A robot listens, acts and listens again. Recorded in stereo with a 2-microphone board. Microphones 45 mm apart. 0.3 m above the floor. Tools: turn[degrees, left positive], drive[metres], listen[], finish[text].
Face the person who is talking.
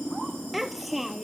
Action: turn[30]
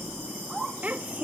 Thought: So it is at 35° right.
Action: turn[-35]
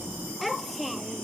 Action: finish[Facing the child speaking.]